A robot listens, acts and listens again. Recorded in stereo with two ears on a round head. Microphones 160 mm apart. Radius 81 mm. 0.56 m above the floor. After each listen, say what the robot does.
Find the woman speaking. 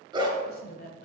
Turn 50° left.
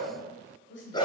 Turn 70° left.
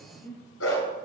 Turn 15° left.
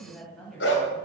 Found it: a woman speaking, straight ahead, 2 to 4 m away.